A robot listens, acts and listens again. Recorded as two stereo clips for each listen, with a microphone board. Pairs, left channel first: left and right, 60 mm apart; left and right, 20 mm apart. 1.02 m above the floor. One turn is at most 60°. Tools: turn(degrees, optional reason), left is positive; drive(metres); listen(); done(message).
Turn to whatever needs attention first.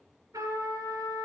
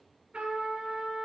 listen()
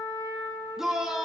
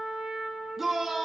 turn(degrees=-30)
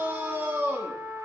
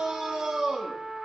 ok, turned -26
turn(degrees=-60, reason="So it is at 145° right.")
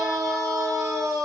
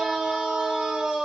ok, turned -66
turn(degrees=-60, reason="The shout is now 80° right.")
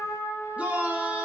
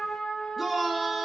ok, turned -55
turn(degrees=-25, reason="The shout is now 25° right.")
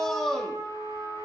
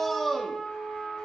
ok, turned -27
done("Found it: a shout, straight ahead.")